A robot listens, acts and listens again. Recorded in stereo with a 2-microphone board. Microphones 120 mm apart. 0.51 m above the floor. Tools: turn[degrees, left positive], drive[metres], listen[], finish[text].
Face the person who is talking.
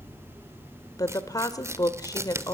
Thought: The woman speaking: about 30° left or 150° left.
Action: turn[30]
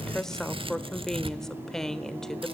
Action: finish[Found it: a woman speaking, straight ahead.]